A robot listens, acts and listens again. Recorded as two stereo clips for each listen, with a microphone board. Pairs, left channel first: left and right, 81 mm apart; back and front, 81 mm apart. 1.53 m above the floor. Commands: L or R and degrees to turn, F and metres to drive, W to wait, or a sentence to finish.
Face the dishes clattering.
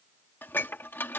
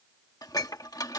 L150
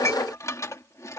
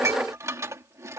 L50
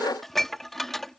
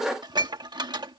Facing the dishes clattering.